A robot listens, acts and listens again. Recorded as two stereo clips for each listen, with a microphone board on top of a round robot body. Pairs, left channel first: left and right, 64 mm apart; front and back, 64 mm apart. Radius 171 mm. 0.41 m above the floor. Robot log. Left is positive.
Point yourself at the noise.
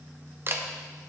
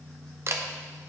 note: The camera shutter: 140° right.
cmd yaw -140
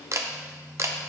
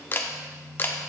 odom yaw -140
note: The camera shutter is now 55° right.
cmd yaw -55
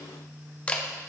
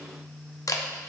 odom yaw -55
note: The camera shutter is now 20° left.
cmd yaw +20
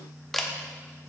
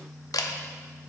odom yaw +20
end: Facing the camera shutter, under 1 m away.